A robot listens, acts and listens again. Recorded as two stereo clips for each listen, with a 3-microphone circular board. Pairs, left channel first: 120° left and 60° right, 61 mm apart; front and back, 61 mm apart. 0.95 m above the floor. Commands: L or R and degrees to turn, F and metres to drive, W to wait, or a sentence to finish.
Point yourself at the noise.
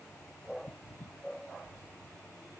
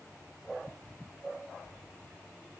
W
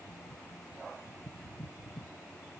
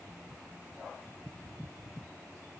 W
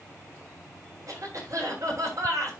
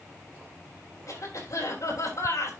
R30
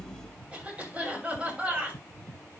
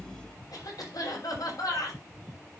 L10
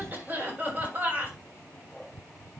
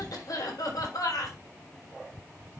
Facing the cough, over 4 m away.